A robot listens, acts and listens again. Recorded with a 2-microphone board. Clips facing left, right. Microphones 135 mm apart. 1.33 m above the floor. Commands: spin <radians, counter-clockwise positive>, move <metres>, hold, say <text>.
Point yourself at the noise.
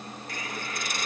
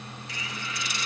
spin 0.96
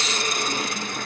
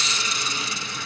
spin 1.13
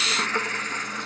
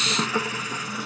spin -0.17
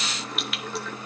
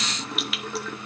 say Facing the hiss, under 1 m away.